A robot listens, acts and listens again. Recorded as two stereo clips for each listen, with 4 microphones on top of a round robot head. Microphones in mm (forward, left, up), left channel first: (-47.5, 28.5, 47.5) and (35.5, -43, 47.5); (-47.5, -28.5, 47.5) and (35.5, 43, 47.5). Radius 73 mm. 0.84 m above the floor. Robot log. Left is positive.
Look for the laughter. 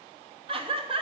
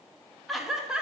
note: The laughter: 40° right.
cmd yaw -40
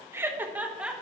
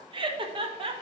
note: The laughter is now 40° left.
cmd yaw +40
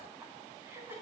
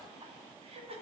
note: The laughter is now 25° left.
cmd yaw +25
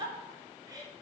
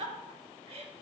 note: The laughter is now 15° left.
cmd yaw +15
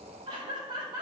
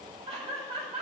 note: The laughter is now 10° left.
cmd yaw +10
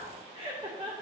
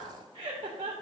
end: Found it: laughter, straight ahead, 2 to 4 m away.